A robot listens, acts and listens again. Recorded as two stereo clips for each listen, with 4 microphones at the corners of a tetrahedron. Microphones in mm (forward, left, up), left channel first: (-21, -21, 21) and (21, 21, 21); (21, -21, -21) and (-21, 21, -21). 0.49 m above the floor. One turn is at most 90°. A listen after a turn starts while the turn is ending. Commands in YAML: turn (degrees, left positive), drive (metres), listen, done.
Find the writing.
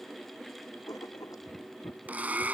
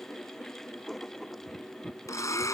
turn: -90
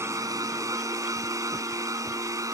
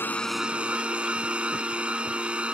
turn: -45
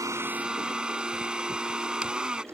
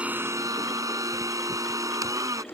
listen: true
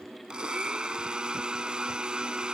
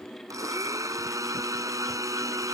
done: "Facing where the writing came from. I can't hear it now."